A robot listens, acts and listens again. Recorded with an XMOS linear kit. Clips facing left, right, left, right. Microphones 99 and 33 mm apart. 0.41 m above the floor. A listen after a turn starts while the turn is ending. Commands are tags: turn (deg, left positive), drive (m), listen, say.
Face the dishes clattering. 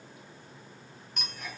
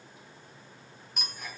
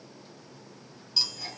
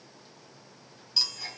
<listen/>
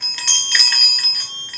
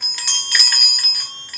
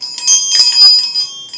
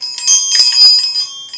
<listen/>
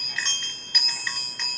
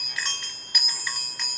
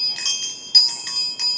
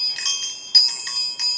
<say>I can't make out dishes clattering to turn to.</say>